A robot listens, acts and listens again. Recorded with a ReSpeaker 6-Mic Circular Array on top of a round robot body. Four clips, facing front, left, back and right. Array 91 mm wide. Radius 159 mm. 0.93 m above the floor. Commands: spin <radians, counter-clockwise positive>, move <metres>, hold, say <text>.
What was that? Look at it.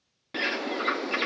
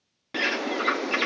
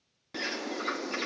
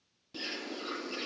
spin 1.22
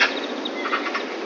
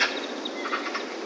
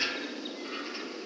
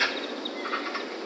spin 0.17
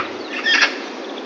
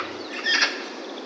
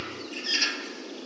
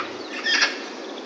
say Facing the bird.